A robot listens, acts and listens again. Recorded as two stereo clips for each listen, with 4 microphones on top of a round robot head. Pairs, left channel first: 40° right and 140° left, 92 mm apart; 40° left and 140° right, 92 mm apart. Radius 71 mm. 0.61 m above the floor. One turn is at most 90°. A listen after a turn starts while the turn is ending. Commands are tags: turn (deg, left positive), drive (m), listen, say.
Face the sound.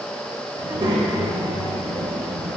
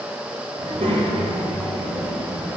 <turn deg="90"/>
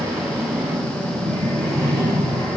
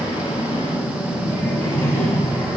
<turn deg="45"/>
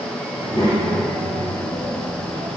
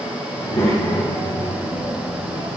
<turn deg="-10"/>
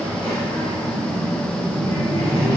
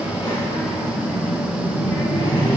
<say>Found it: a child speaking, straight ahead.</say>